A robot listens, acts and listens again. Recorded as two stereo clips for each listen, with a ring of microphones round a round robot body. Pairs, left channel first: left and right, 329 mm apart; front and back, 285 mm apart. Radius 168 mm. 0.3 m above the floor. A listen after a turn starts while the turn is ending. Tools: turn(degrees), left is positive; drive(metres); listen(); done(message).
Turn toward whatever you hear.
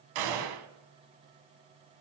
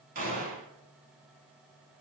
turn(degrees=-115)
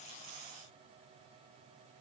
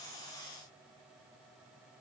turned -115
done("I heard a gunshot from this way, but can't make it out now.")